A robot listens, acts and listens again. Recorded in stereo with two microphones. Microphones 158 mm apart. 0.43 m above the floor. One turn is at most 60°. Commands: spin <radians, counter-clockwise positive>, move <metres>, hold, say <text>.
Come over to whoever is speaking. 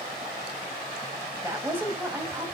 spin -0.52
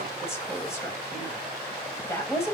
spin 0.35
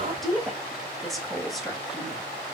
move 1.0
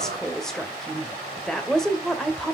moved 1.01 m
move 1.0
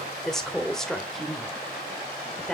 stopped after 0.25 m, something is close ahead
say I am next to the woman speaking.